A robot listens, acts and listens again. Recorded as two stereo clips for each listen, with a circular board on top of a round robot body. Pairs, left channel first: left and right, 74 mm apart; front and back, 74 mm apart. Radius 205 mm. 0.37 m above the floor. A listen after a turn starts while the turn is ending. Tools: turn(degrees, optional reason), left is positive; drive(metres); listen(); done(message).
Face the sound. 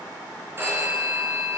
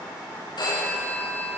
turn(degrees=-30, reason="The phone ringing: 30° right.")
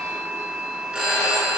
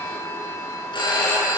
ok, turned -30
turn(degrees=-10, reason="The phone ringing is now 10° right.")
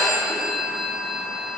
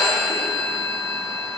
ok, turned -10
done("Found it: a phone ringing, straight ahead.")